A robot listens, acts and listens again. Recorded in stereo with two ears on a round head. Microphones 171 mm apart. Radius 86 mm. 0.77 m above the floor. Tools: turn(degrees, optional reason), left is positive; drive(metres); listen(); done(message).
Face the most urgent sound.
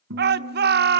turn(degrees=-55, reason="The shout: about 55° right or 125° right.")
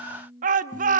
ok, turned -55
turn(degrees=-50, reason="So it is at 50° right.")
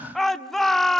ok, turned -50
done("Facing the shout.")